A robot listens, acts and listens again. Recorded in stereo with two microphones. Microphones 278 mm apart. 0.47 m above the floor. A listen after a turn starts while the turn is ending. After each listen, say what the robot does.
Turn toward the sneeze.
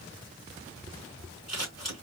Keep listening.
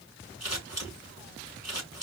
Keep listening.
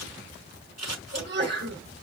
Turn 40° right.
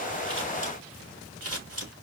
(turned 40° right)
Keep listening.
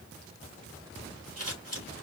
I heard a sneeze, but can't make it out now. It was about straight ahead or 100° right.